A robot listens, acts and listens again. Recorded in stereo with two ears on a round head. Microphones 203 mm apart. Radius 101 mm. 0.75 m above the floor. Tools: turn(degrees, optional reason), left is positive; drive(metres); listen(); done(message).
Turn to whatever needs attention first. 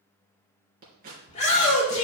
turn(degrees=30, reason="The shout: about 30° left or 150° left.")
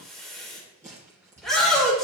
done("Facing the shout.")